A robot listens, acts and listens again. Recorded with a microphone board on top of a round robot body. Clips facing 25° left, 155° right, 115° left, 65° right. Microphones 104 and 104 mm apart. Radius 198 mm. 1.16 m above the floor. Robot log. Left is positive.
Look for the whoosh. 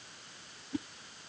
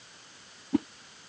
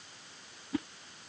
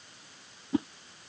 note: The whoosh: 130° right.
cmd yaw -130
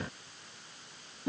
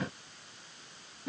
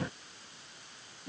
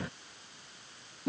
note: The whoosh is now 45° right.
cmd yaw -45
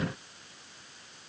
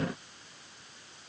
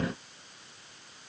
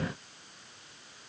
cmd idle
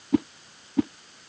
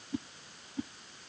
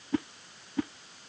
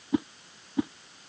end: Found it: a whoosh, straight ahead.